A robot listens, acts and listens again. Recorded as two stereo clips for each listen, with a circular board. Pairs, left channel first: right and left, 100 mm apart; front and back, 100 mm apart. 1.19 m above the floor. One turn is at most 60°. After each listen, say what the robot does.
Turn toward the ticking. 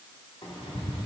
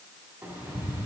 Turn 60° right.
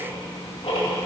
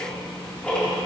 Turn 60° right.
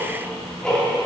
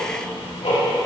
Turn 10° right.
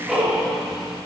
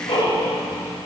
Facing the ticking, 2 to 4 m away.